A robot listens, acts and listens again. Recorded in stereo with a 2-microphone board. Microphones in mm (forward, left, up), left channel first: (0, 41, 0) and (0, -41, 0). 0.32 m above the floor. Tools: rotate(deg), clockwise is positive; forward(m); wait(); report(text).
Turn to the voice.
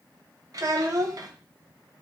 rotate(45)
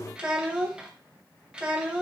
rotate(15)
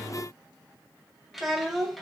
report("Facing the child speaking, under 1 m away.")